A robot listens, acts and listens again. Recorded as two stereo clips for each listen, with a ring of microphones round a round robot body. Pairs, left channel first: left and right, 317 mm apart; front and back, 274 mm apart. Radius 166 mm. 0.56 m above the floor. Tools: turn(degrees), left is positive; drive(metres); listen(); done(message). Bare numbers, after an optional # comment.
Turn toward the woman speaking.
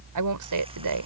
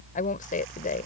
# The woman speaking: 65° right.
turn(-65)
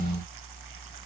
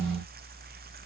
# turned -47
# Nothing new. It was at 15° right.
turn(-15)
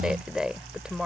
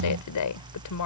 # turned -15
done("Found it: a woman speaking, straight ahead.")